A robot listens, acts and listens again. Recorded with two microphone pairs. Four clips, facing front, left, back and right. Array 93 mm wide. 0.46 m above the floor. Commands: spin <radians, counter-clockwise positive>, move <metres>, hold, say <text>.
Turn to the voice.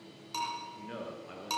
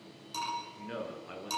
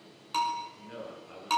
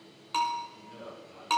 spin 1.13
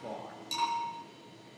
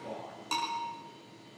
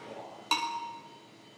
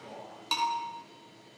spin 0.26
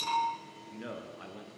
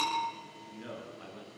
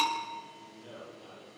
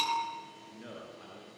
say Found it: a man speaking, straight ahead.